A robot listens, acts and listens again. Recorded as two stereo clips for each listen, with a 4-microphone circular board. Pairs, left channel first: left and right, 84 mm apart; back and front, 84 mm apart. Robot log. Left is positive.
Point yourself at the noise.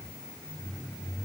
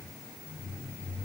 cmd idle
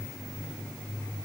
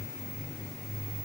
cmd idle
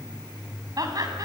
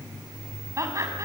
note: The laughter: 50° right.
cmd yaw -50
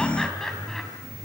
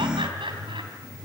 cmd idle
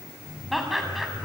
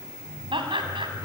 end: Found it: laughter, straight ahead.